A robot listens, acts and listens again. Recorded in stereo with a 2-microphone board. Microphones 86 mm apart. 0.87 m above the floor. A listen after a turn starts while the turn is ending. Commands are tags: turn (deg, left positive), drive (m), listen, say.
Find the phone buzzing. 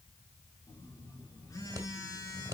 <turn deg="40"/>
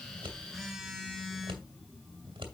<say>Found it: a phone buzzing, straight ahead, 2 to 4 m away.</say>